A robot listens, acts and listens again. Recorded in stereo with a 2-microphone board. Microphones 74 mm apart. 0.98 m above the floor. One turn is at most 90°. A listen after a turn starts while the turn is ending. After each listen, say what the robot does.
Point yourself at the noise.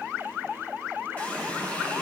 Turn 20° left.
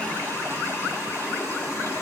Turn 90° left.
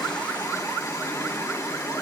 Turn 55° left.
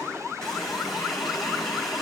Facing the running tap.